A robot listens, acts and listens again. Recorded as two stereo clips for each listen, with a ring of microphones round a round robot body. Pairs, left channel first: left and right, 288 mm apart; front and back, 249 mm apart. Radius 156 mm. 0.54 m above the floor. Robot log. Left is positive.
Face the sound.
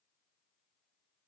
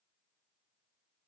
cmd idle
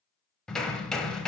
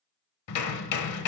end: Found it: hammering, straight ahead, under 1 m away.